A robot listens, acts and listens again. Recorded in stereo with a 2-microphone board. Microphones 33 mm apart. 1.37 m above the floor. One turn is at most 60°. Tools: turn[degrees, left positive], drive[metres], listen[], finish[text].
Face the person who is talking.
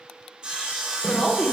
Thought: The woman speaking: about 15° left or 165° left.
Action: turn[15]
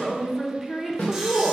Action: finish[Facing the woman speaking, 1 to 2 m away.]